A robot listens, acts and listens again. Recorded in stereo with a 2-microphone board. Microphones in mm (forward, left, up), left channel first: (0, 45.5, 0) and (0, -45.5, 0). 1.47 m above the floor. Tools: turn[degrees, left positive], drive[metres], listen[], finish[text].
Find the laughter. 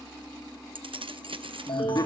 Thought: The laughter: about 45° left or 135° left.
Action: turn[45]
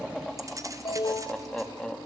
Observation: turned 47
Thought: So it is at 10° left.
Action: turn[10]
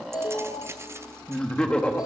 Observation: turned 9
Thought: The laughter is now 15° left.
Action: turn[15]
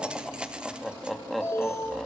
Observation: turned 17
Action: finish[Found it: laughter, straight ahead, 2 to 4 m away.]